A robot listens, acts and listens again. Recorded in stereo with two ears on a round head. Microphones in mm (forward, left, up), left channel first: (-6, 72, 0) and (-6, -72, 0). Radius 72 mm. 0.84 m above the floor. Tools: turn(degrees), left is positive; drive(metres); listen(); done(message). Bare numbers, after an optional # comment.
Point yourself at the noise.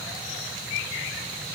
listen()
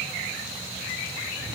listen()
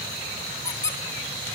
# The squeak: about 20° left or 160° left.
turn(20)
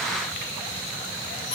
listen()
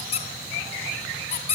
# So it is at 140° left.
turn(140)
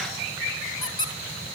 # The squeak is now 30° left.
turn(30)
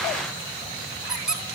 done("Facing the squeak, 2 to 4 m away.")